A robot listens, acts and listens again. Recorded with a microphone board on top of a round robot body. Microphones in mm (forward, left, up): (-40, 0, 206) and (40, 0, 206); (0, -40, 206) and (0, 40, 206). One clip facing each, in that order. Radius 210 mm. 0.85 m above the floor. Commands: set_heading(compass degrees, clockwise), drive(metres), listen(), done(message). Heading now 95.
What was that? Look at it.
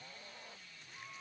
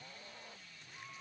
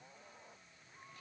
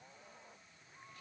listen()
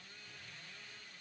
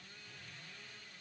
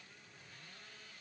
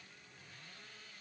listen()
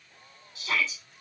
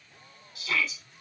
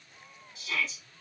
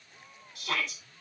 set_heading(340)
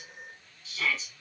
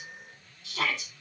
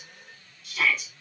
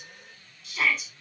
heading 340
done("Found it: a shout, straight ahead, over 4 m away.")